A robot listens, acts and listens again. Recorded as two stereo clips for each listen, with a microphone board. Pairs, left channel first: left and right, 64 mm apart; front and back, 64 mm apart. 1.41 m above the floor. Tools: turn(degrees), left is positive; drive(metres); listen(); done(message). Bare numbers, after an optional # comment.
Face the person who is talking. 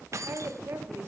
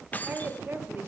# The woman speaking: 130° right.
turn(-130)
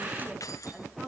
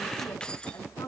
# The woman speaking is now 10° right.
turn(-10)
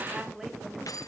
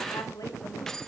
done("Facing the woman speaking.")